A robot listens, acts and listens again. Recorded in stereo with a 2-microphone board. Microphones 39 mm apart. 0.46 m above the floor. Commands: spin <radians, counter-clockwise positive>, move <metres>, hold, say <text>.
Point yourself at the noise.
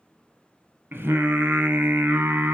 spin -1.05
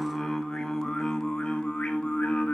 spin 0.52
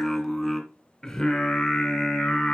spin 0.26
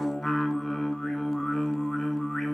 say Found it: singing, straight ahead.